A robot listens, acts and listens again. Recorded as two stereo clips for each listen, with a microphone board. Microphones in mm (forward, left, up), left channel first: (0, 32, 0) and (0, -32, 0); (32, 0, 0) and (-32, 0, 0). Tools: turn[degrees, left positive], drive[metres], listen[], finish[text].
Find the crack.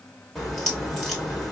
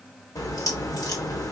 Action: finish[Facing the crack.]